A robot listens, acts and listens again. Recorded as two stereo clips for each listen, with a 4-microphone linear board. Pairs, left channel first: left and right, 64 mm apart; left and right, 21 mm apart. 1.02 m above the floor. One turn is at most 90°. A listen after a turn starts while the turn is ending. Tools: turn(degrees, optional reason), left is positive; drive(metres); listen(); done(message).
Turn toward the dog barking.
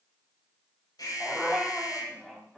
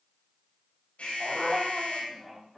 turn(degrees=30)
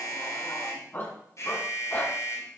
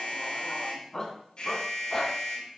turn(degrees=90, reason="So it is at 150° left.")
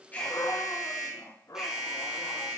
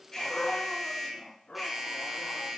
turn(degrees=85, reason="The dog barking is now 85° left.")
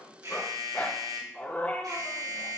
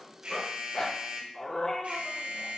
turn(degrees=25, reason="The dog barking is now 25° left.")
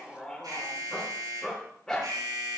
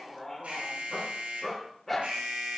turn(degrees=10, reason="The dog barking is now 10° left.")
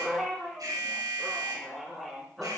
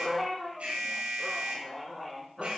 done("Found it: a dog barking, straight ahead.")